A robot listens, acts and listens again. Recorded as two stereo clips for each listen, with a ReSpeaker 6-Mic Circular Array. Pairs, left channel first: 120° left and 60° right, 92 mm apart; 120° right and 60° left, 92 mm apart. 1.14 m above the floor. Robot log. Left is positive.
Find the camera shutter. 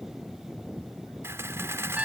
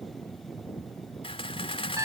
note: The camera shutter: 120° right.
cmd yaw -120
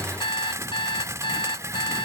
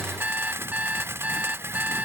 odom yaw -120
end: Facing the camera shutter.